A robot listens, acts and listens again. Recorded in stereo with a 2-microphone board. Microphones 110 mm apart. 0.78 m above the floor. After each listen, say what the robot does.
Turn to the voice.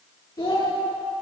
Turn 35° left.
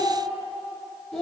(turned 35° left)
Facing the child speaking, 1 to 2 m away.